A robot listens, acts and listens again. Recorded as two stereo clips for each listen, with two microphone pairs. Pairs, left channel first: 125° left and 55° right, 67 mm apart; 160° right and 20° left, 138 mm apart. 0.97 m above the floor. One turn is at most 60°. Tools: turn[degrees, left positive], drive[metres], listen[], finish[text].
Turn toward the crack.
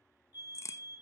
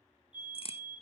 Thought: The crack: 160° left.
Action: turn[60]
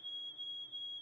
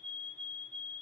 Thought: Nothing new. It was at 100° left.
Action: turn[60]
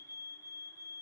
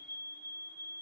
Thought: Nothing new. It was at 40° left.
Action: turn[40]
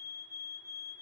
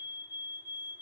Action: finish[Facing where the crack came from. I can't hear it now.]